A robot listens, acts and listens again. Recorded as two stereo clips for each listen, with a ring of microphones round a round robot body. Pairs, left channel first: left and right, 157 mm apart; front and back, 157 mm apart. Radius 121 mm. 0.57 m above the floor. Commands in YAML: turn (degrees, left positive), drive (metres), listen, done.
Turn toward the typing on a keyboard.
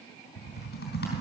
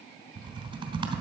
turn: 120
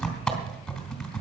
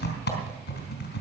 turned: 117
done: "Facing the typing on a keyboard, 2 to 4 m away."